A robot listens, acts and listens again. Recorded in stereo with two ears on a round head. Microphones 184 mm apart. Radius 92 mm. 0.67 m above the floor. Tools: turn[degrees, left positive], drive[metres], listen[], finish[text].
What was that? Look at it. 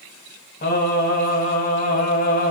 Thought: The singing: about 40° left or 140° left.
Action: turn[40]
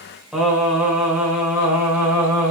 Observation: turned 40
Thought: So it is at 10° right.
Action: turn[-10]
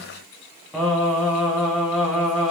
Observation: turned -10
Action: finish[Found it: singing, straight ahead.]